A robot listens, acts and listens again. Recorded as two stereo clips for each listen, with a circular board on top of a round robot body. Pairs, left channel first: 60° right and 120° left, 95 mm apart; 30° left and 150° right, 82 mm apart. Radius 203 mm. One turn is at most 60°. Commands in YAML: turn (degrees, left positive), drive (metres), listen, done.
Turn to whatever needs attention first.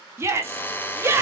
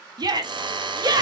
turn: 60
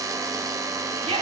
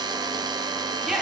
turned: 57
turn: 60
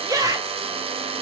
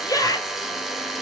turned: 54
turn: 60
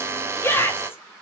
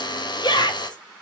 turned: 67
done: "Found it: a shout, straight ahead."